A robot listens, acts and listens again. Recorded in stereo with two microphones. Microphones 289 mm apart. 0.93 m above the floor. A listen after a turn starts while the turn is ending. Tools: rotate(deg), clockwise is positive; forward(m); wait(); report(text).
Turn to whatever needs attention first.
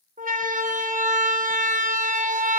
rotate(30)
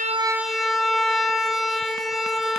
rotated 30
report("Found it: a siren, straight ahead.")